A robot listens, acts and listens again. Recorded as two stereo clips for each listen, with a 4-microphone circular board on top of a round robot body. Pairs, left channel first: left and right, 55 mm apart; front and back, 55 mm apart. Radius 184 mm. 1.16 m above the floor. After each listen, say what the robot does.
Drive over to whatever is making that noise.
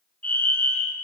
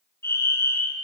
Turn 35° left.
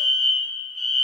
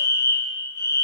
Drive 1.0 m forward.
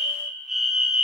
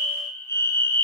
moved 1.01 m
Drive 1.0 m forward.
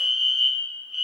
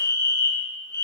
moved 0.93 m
Drive 1.0 m forward.
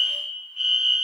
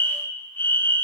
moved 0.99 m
Turn 10° right.
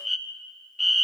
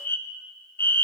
Drive 1.0 m forward.
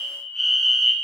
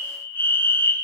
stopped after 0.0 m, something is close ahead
Arrived at the fire alarm, straight ahead.